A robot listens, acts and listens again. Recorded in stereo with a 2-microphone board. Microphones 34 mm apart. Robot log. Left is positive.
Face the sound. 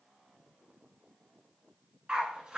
note: The dog barking: about 20° right or 160° right.
cmd yaw -20
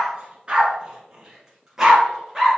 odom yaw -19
cmd yaw -30
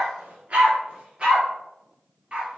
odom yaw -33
note: The dog barking: about 25° right or 155° right.
cmd yaw -25
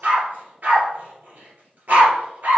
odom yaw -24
note: So it is at 130° right.
cmd yaw -130
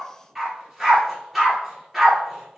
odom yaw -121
note: The dog barking is now 10° right.
cmd yaw -10
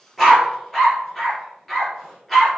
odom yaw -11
end: Found it: a dog barking, straight ahead.